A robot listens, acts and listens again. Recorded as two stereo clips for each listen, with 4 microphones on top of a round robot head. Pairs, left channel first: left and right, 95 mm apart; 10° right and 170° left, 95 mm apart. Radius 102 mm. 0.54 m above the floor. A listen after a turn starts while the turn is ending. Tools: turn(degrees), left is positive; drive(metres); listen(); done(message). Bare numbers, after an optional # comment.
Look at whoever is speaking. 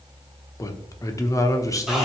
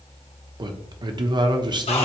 # The man speaking: 140° left.
turn(140)
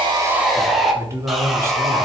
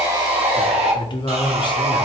# The man speaking is now 35° right.
turn(-35)
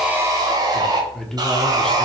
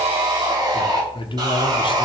done("Found it: a man speaking, straight ahead, 1 to 2 m away.")